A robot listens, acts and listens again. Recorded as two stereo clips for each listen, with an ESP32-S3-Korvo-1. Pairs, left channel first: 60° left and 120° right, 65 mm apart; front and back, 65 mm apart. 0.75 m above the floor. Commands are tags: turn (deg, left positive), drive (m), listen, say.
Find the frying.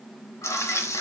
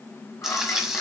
<turn deg="95"/>
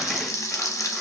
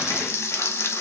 <turn deg="35"/>
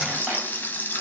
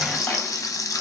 <say>Found it: frying, straight ahead, under 1 m away.</say>